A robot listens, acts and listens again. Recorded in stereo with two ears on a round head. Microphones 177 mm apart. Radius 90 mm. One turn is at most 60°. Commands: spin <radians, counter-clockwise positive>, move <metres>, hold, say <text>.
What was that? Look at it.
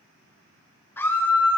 spin 0.52
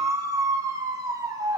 spin -0.26
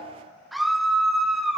say Found it: a scream, straight ahead.